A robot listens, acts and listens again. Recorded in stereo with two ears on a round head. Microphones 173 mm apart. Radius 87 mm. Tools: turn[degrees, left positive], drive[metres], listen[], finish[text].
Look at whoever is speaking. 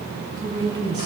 Thought: The woman speaking: about 20° right or 160° right.
Action: turn[-20]
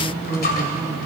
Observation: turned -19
Action: finish[Found it: a woman speaking, straight ahead, over 4 m away.]